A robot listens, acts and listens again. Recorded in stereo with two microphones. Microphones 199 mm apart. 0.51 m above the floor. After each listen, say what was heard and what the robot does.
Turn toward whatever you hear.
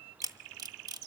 The camera shutter: about 20° right or 160° right. Turn 20° right.
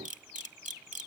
So it is at 140° right. Turn 140° right.
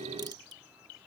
Keep listening.
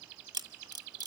The camera shutter is now 20° right. Turn 20° right.
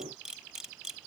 Found it: a camera shutter, straight ahead.